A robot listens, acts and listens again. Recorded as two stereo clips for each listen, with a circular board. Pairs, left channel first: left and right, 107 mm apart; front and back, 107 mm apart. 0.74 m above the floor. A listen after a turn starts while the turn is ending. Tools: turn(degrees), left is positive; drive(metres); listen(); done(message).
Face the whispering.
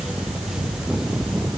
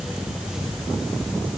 listen()
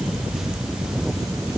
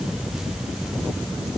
listen()
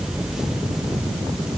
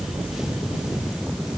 done("I can't make out whispering.")